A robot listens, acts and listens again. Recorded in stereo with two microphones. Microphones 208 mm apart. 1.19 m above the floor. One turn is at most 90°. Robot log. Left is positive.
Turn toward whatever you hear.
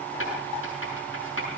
cmd yaw +90
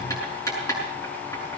note: So it is at 15° left.
cmd yaw +15
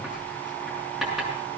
end: Facing the writing, over 4 m away.